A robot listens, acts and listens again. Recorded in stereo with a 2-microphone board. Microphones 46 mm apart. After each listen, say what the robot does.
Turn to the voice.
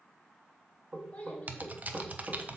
Turn 30° left.
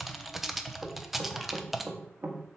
Keep listening.
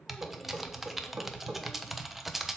Keep listening.
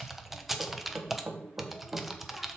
I heard a child speaking, but can't make it out now. It was about straight ahead or 120° left.